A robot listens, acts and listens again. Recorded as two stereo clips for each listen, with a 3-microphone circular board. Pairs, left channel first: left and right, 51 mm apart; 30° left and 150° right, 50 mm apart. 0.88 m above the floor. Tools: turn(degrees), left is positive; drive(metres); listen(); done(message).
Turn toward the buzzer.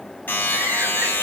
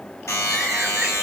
turn(degrees=40)
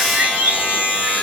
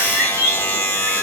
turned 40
turn(degrees=-25)
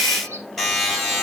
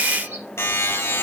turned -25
done("Facing the buzzer, over 4 m away.")